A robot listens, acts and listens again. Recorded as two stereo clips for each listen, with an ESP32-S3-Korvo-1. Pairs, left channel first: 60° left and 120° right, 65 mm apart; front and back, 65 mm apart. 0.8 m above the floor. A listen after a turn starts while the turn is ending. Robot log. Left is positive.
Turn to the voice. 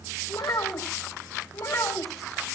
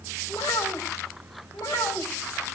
note: The child speaking: 25° left.
cmd yaw +25
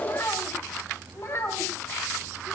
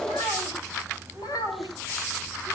note: The child speaking is now 15° left.
cmd yaw +15
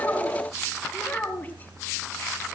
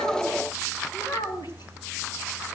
end: Found it: a child speaking, straight ahead, over 4 m away.